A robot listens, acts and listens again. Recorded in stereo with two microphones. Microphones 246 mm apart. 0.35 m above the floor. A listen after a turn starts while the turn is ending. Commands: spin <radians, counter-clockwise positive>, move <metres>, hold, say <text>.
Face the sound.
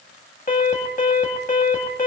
spin 0.61
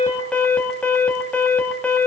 say Facing the alarm, 2 to 4 m away.